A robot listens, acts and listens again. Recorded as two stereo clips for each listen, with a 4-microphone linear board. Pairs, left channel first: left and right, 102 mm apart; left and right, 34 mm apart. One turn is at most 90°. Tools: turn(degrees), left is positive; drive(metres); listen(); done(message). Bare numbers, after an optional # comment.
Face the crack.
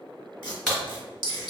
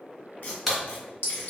turn(30)
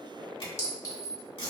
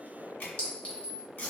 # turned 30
listen()
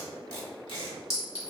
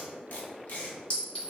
done("I heard a crack, but can't make it out now. It was about 25° right or 145° left.")